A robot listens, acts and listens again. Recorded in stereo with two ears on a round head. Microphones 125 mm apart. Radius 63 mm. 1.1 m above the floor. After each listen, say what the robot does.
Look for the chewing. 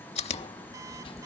Turn 45° left.
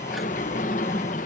Keep listening.
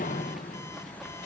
Keep listening.
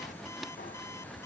I heard chewing, but can't make it out now. It was about straight ahead or 90° left.